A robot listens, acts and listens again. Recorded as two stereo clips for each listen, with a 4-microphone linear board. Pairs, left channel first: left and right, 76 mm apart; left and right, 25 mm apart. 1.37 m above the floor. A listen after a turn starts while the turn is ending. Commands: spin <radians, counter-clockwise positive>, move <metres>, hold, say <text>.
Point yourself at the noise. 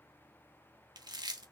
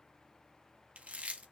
spin -1.13
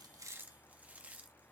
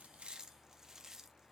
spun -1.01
spin -0.35
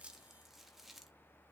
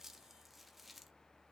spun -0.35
say Facing the chewing.